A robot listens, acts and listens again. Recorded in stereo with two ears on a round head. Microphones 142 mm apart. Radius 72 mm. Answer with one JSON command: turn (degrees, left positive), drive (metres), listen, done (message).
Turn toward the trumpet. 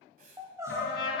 {"turn": 90}
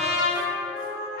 {"done": "Found it: a trumpet, straight ahead, 2 to 4 m away."}